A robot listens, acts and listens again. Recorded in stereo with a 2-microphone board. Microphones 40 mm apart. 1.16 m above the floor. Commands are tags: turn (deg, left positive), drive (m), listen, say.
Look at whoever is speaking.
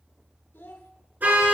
<turn deg="75"/>
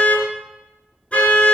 <listen/>
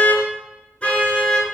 <listen/>
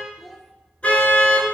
<say>Facing the child speaking, 1 to 2 m away.</say>